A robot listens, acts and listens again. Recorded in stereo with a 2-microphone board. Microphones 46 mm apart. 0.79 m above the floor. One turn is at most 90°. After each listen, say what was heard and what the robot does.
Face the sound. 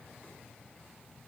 Keep listening.
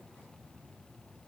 Keep listening.
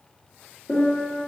The piano: about 55° left or 125° left. Turn 55° left.
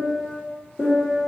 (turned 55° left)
Facing the piano.